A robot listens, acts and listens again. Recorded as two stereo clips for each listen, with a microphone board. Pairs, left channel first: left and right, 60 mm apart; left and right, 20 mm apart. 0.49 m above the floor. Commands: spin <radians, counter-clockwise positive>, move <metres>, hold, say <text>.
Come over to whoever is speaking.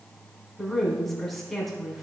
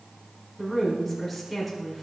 spin 0.52
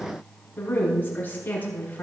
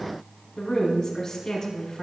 spin 2.62
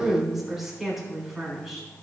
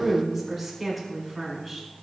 move 1.0
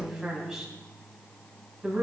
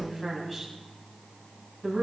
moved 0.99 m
spin -0.17
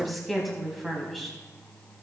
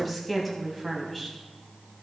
move 1.0
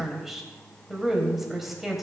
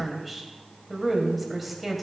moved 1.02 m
move 1.0
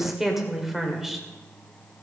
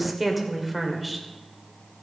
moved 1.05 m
move 1.0
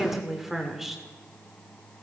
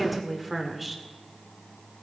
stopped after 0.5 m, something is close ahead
say I am next to the woman speaking.